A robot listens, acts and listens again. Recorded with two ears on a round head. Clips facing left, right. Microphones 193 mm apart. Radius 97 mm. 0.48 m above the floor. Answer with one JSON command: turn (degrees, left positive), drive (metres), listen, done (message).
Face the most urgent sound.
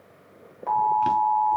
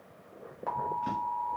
{"turn": -30}
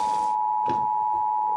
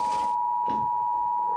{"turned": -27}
{"turn": -150}
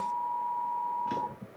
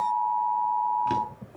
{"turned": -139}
{"turn": -10}
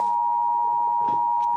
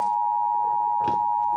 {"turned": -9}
{"done": "Found it: an alarm, straight ahead, 1 to 2 m away."}